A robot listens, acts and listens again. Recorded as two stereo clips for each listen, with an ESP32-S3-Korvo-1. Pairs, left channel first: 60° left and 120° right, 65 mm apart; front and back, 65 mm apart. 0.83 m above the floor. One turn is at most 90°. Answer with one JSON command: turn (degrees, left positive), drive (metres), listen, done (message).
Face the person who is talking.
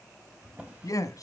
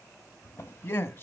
{"turn": 45}
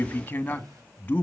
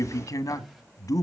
{"done": "Facing the man speaking."}